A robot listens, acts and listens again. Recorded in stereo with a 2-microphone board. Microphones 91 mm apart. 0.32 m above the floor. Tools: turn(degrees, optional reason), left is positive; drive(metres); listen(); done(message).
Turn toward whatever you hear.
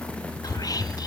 turn(degrees=40, reason="The whispering: about 40° left or 140° left.")
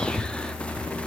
turn(degrees=10, reason="So it is at 10° left.")
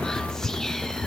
done("Found it: whispering, straight ahead, 1 to 2 m away.")